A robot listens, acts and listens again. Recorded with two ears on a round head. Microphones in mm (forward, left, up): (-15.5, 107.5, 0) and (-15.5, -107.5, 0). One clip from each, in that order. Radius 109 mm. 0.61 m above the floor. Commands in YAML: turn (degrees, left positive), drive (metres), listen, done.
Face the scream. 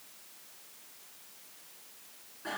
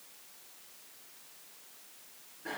listen: true
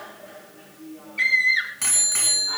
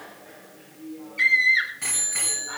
turn: 30
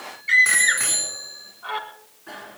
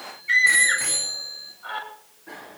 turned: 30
turn: 140
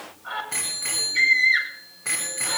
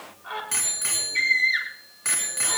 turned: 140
turn: -15
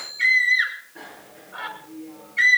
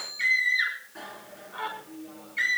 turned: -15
done: "Found it: a scream, straight ahead, over 4 m away."